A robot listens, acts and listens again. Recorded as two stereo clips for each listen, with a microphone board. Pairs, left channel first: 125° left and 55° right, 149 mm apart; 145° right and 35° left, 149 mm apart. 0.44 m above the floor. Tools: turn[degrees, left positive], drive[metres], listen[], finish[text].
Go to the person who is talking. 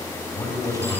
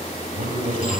Thought: The man speaking: 55° left.
Action: turn[55]
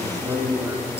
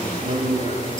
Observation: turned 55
Thought: The man speaking is now 15° left.
Action: turn[15]
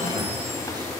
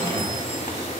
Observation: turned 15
Action: listen[]
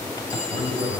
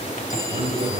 Action: drive[1.0]
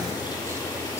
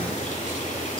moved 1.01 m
Action: listen[]
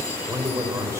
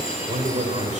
Thought: The man speaking is now 10° left.
Action: turn[10]
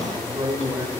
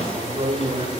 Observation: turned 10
Action: drive[1.0]
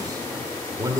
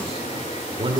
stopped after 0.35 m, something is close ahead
Action: finish[I am next to the man speaking.]